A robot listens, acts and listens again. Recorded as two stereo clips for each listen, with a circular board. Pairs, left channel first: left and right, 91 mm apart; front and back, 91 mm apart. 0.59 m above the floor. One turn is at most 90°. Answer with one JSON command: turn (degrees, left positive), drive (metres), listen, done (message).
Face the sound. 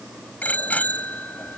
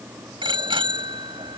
{"turn": 90}
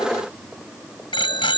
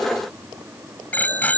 {"turn": 70}
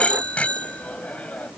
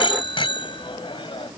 {"turn": 15}
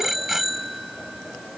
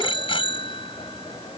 {"done": "Facing the bicycle bell."}